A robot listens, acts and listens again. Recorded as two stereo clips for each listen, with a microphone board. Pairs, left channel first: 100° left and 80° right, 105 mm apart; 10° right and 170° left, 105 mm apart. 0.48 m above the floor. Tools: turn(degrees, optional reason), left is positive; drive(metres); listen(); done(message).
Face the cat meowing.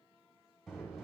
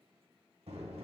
listen()
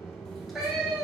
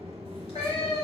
done("Facing the cat meowing.")